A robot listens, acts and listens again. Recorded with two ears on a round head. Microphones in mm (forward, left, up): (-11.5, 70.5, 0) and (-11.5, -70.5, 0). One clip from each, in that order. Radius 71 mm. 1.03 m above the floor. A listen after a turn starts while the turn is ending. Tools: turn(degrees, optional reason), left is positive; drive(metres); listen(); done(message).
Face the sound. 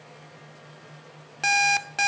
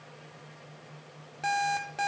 turn(degrees=55, reason="The alarm clock: about 55° left or 125° left.")
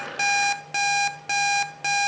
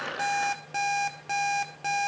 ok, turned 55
turn(degrees=40, reason="So it is at 40° left.")
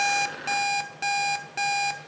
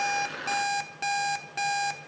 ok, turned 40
done("Facing the alarm clock.")